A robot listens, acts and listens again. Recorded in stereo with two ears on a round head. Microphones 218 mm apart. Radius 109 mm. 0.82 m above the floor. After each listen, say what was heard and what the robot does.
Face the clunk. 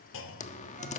The clunk: about 55° left or 125° left. Turn 55° left.
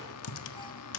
Keep listening.
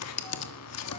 I heard a clunk, but can't make it out now. It was about straight ahead or 70° left.